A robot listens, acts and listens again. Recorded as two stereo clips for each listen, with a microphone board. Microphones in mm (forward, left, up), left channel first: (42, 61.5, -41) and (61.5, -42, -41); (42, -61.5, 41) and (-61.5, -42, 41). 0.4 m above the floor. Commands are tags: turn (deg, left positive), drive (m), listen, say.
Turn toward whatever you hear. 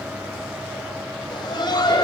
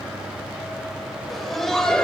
<turn deg="70"/>
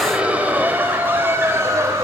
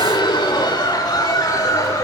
<turn deg="-45"/>
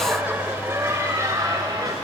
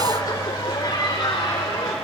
<turn deg="-45"/>
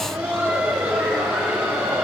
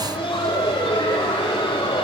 <turn deg="-10"/>
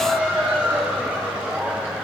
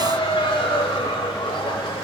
<say>Found it: laughter, straight ahead.</say>